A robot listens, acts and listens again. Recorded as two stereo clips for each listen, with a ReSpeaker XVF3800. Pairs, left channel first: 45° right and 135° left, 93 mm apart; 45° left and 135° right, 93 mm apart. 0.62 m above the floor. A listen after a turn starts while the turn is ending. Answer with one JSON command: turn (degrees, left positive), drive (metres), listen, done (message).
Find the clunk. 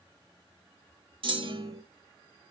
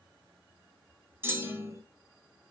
{"turn": 160}
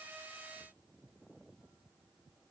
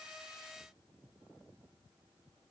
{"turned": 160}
{"done": "I heard a clunk from this way, but can't make it out now."}